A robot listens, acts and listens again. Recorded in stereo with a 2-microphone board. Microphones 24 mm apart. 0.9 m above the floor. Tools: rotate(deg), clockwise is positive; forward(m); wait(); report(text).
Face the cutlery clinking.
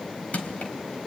wait()
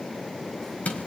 wait()
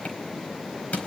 report("I can't make out cutlery clinking to turn to.")